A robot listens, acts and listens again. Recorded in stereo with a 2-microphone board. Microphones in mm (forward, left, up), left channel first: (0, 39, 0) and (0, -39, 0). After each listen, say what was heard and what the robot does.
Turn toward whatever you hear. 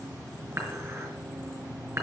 The dishes clattering: about 40° right or 140° right. Turn 40° right.
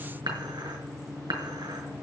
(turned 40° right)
So it is at 100° right. Turn 100° right.
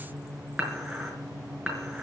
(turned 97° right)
Facing the dishes clattering.